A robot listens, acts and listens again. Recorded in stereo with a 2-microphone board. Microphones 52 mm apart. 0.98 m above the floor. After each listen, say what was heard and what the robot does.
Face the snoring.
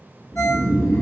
The snoring: about 60° right or 120° right. Turn 60° right.
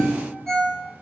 So it is at 65° right. Turn 65° right.
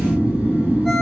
The snoring is now 35° right. Turn 35° right.
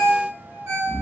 Found it: snoring, straight ahead, 1 to 2 m away.